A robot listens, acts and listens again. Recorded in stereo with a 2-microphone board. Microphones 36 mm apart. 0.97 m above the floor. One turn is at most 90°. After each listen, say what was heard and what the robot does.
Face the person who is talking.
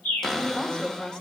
The woman speaking: about 25° left or 155° left. Turn 25° left.
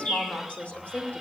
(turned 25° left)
So it is at 130° left. Turn 90° left.
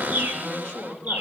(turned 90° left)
The woman speaking is now 35° left. Turn 35° left.
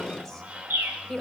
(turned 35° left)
Facing the woman speaking, 2 to 4 m away.